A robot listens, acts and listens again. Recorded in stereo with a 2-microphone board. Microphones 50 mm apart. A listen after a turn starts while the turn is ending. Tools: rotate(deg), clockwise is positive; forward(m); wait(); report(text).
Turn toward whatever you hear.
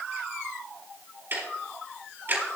rotate(45)
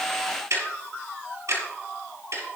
rotate(90)
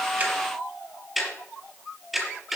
report("Facing the ticking.")